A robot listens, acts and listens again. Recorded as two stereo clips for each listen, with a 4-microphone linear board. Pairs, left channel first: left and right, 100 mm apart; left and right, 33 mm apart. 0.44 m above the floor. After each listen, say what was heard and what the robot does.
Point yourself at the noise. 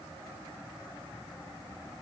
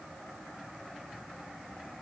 Keep listening.
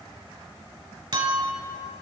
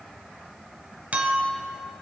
The clink: about 55° right or 125° right. Turn 55° right.
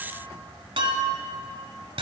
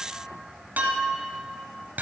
So it is at 65° right. Turn 65° right.
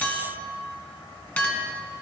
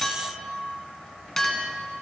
The clink is now 20° left. Turn 20° left.
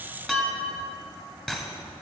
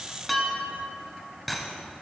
Facing the clink, 1 to 2 m away.